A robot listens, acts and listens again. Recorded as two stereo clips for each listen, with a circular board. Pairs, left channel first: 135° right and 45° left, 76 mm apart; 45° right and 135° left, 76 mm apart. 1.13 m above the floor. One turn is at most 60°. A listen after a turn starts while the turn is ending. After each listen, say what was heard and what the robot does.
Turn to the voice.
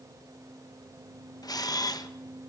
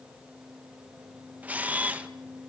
Keep listening.
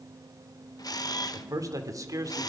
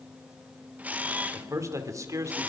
The man speaking: 90° left. Turn 60° left.
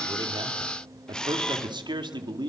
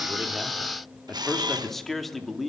The man speaking is now 45° left. Turn 45° left.
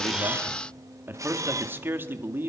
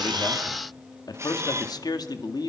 The man speaking is now 15° right. Turn 15° right.
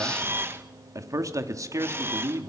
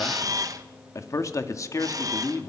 Facing the man speaking.